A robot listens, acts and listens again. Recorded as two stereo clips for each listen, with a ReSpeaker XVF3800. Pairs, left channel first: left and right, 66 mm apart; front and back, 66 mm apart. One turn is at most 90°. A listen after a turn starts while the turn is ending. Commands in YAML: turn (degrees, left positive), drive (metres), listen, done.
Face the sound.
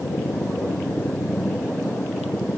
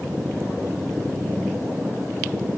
listen: true
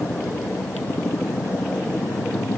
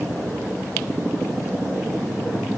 listen: true
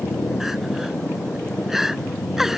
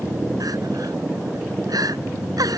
turn: -90
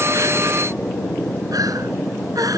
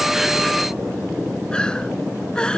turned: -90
turn: -75
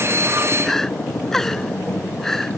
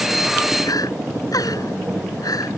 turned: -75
done: "Facing the crying."